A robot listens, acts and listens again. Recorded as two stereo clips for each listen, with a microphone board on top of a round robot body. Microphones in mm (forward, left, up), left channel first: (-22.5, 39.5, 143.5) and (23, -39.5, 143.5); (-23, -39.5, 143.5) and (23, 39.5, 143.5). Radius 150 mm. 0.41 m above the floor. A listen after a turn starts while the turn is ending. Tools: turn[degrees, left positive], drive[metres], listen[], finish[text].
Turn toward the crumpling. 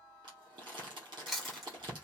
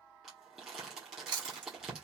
Thought: The crumpling: 25° right.
Action: turn[-25]
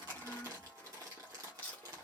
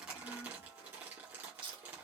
Action: finish[Found it: crumpling, straight ahead.]